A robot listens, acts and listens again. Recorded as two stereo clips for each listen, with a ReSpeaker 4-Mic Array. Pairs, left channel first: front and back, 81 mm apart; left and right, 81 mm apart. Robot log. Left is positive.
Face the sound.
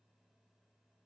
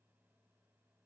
cmd idle
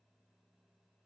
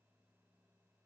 cmd idle
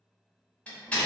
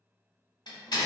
note: The door slam: 75° left.
cmd yaw +75
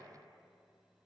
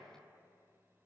end: I heard a door slam from this way, but can't make it out now.